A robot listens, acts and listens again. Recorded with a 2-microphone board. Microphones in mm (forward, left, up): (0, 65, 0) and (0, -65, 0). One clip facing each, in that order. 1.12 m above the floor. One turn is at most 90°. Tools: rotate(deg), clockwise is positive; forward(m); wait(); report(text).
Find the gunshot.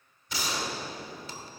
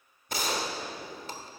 rotate(50)
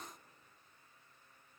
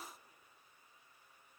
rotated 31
wait()
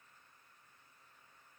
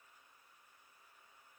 report("I heard a gunshot, but can't make it out now. It was about 20° right or 95° right.")